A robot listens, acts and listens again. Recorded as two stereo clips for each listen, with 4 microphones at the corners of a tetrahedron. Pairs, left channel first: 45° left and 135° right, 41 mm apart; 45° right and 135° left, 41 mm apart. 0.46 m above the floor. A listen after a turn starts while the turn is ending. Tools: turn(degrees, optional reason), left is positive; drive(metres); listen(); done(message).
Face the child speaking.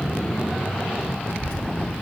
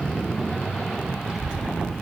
turn(degrees=65, reason="The child speaking: 65° left.")
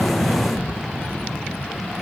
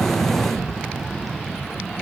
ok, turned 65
listen()
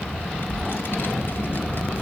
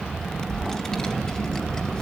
turn(degrees=20, reason="The child speaking is now 20° left.")
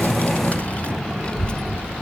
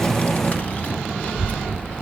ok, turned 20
turn(degrees=-15, reason="The child speaking is now 15° right.")
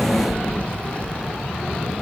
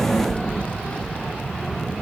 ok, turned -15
done("Facing the child speaking, 1 to 2 m away.")